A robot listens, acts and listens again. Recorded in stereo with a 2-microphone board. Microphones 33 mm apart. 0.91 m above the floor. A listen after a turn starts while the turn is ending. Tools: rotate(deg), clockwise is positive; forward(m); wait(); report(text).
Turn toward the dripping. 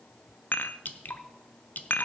rotate(-60)
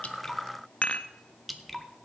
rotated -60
report("Facing the dripping, 1 to 2 m away.")